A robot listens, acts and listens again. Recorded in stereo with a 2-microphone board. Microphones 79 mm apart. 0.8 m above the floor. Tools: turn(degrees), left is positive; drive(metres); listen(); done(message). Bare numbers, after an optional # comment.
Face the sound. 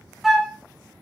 turn(30)
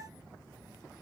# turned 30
listen()
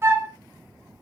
# So it is at 35° right.
turn(-35)
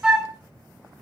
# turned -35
# The flute is now 10° right.
turn(-10)
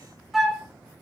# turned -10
done("Found it: a flute, straight ahead.")